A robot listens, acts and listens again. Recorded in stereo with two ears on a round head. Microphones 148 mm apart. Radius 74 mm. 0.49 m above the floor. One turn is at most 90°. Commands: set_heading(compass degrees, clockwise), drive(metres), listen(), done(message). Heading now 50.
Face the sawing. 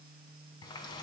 listen()
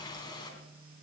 listen()
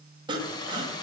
set_heading(80)
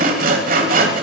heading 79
set_heading(169)
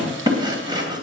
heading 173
set_heading(198)
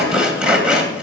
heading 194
done("Found it: sawing, straight ahead, 2 to 4 m away.")